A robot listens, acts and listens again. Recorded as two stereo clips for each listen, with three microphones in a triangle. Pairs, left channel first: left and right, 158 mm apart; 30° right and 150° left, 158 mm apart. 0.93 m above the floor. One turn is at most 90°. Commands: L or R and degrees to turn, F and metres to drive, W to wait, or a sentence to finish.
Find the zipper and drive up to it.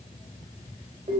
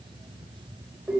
W
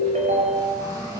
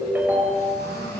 R25
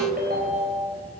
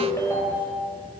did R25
W
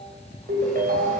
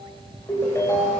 W
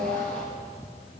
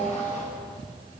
Facing where the zipper came from. I can't hear it now. I did not reach it.